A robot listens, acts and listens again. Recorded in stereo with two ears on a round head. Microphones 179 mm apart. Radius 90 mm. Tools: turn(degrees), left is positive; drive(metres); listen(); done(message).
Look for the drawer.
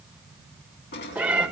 turn(degrees=55)
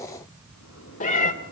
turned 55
listen()
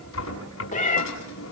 turn(degrees=70)
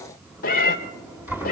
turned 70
turn(degrees=-10)
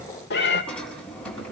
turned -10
done("Found it: a drawer, straight ahead, over 4 m away.")